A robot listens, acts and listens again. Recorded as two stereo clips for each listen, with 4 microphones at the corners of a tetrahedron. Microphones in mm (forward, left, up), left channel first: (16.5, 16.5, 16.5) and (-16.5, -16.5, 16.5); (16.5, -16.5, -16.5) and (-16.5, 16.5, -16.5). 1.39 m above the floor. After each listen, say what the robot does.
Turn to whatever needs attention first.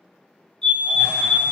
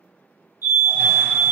Turn 120° left.
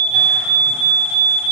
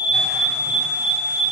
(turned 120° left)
Turn 40° right.
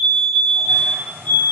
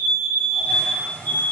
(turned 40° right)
Facing the fire alarm.